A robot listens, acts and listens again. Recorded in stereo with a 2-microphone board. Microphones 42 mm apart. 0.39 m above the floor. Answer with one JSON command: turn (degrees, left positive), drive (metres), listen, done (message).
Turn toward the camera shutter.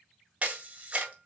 {"turn": -30}
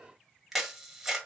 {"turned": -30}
{"done": "Facing the camera shutter."}